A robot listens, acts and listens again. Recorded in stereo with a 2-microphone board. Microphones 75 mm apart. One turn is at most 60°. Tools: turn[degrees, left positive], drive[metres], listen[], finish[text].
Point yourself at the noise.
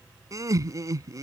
Thought: The laughter: about 45° right or 135° right.
Action: turn[-45]
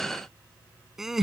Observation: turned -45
Action: finish[Found it: laughter, straight ahead.]